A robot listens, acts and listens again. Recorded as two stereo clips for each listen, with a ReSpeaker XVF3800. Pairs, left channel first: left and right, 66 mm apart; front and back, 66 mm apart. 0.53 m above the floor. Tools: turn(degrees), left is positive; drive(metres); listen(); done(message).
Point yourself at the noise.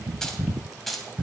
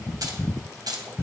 turn(degrees=175)
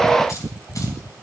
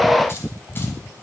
listen()
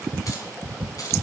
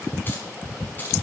turn(degrees=60)
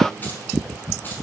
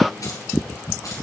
listen()
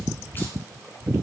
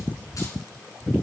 listen()
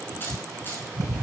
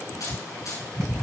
turn(degrees=35)
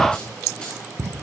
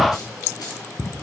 listen()
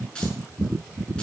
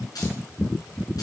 turn(degrees=15)
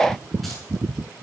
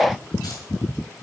listen()
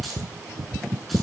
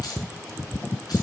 done("Found it: keys jangling, straight ahead.")